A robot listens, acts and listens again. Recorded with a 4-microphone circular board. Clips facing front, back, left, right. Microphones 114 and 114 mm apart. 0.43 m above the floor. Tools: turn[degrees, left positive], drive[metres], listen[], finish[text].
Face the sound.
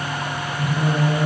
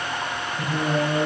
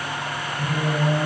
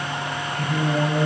Thought: The singing: 155° right.
Action: turn[-155]
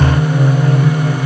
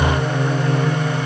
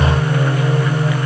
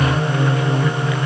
Thought: The singing is now 15° right.
Action: turn[-15]
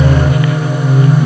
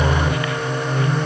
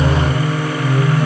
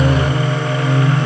Thought: The singing is now 15° left.
Action: turn[15]
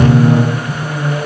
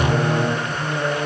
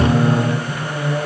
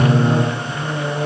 Thought: The singing is now 15° left.
Action: turn[15]
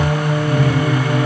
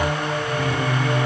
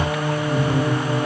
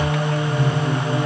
Thought: The singing is now 20° left.
Action: turn[20]
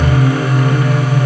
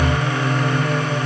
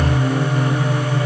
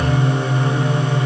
Action: finish[Facing the singing, 1 to 2 m away.]